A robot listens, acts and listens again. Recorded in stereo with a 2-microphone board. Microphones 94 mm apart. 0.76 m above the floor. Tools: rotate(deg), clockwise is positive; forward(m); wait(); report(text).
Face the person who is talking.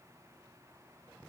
wait()
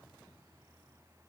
wait()
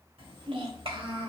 rotate(70)
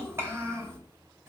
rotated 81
rotate(30)
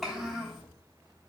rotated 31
report("Found it: a child speaking, straight ahead, 2 to 4 m away.")